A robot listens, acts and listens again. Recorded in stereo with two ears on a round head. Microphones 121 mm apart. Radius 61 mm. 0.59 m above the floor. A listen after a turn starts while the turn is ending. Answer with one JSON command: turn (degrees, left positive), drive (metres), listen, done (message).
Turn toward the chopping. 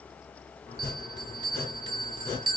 {"turn": 20}
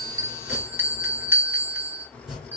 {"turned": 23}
{"done": "Found it: chopping, straight ahead."}